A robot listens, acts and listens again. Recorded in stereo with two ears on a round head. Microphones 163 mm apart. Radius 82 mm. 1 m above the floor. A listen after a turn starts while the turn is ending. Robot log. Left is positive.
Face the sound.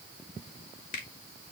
note: The finger snap: about 45° left or 135° left.
cmd yaw +45
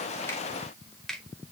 end: Facing the finger snap.